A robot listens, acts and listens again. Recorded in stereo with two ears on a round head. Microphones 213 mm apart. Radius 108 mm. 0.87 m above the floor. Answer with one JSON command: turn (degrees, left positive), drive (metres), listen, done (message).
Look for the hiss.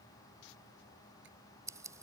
{"listen": true}
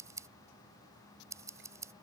{"listen": true}
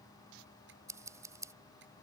{"done": "I can't make out a hiss to turn to."}